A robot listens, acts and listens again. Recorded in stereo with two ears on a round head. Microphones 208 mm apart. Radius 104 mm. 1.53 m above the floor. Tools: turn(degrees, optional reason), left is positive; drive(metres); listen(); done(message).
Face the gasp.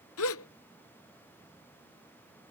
turn(degrees=65, reason="The gasp: about 65° left or 115° left.")
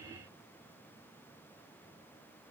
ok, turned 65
listen()
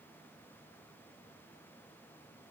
done("I heard a gasp, but can't make it out now. It was about straight ahead or 50° left.")